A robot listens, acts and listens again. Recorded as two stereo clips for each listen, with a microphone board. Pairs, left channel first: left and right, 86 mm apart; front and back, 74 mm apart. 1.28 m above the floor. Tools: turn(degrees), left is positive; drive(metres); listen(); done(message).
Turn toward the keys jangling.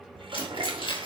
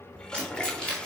turn(degrees=80)
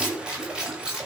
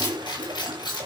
turn(degrees=-10)
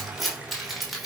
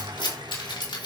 done("Found it: keys jangling, straight ahead, 2 to 4 m away.")